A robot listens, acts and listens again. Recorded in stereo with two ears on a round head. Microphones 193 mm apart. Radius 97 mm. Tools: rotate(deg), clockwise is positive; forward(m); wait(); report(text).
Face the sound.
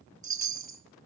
rotate(15)
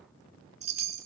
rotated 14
rotate(150)
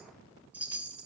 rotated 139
rotate(10)
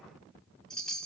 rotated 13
report("Found it: a chime, straight ahead, 1 to 2 m away.")